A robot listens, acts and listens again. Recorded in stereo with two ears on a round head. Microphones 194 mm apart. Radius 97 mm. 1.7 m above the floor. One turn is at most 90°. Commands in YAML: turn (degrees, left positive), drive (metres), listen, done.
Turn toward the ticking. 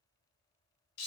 listen: true
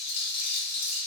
listen: true
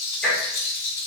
turn: 30
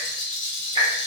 turn: -20
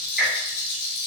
done: "Facing the ticking."